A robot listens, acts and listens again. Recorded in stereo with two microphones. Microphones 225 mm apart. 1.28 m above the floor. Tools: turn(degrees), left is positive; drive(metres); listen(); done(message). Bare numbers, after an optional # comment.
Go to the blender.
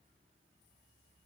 listen()
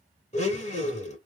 # The blender: about 30° left or 150° left.
turn(30)
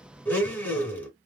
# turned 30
# So it is at 10° left.
turn(10)
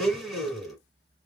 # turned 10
drive(1.0)
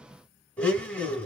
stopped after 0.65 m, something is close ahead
# The blender is now 10° left.
turn(10)
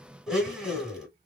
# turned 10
done("I am next to the blender.")